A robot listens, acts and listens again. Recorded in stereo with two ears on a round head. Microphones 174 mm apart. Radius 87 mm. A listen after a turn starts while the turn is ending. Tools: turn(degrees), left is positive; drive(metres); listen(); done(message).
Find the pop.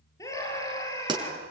turn(degrees=-20)
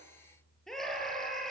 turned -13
listen()
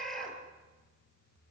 done("I heard a pop, but can't make it out now. It was about 10° right or 145° right.")